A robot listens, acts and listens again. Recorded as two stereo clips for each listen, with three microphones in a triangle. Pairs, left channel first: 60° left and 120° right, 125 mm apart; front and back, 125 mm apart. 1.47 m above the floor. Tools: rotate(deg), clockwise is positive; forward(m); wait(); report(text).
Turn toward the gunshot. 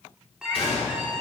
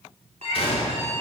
rotate(-30)
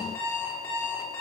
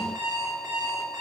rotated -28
report("Facing where the gunshot came from. I can't hear it now.")